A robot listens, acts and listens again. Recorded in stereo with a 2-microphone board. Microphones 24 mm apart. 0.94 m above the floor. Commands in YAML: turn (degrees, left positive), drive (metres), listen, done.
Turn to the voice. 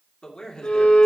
turn: 30
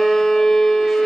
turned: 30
listen: true
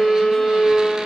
listen: true
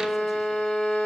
done: "I heard a man speaking, but can't make it out now. It was about straight ahead or 120° left."